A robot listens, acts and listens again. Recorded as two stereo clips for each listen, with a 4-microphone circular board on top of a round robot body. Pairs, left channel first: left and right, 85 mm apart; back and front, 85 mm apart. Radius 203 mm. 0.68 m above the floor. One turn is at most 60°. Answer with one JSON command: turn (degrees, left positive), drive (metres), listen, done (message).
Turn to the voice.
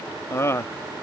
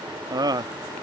{"turn": 35}
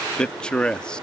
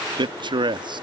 {"turn": 10}
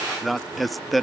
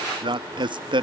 {"done": "Found it: a man speaking, straight ahead."}